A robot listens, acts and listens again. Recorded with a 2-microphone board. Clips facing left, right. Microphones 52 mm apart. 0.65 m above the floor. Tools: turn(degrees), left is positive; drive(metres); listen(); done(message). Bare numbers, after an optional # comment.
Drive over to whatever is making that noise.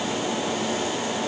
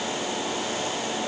listen()
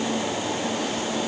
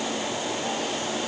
listen()
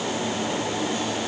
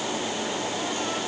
done("I can't make out anything.")